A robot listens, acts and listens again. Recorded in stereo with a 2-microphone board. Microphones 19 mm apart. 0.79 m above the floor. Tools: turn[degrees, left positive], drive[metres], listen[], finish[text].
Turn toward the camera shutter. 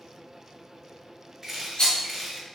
Thought: The camera shutter: about 20° right or 160° right.
Action: turn[-20]
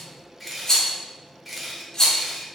Action: finish[Facing the camera shutter, under 1 m away.]